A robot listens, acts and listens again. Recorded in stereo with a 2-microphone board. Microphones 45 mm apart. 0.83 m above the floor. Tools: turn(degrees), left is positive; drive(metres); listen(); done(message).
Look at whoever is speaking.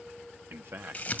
turn(degrees=-60)
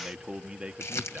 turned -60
turn(degrees=-15)
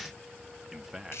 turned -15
done("Found it: a man speaking, straight ahead.")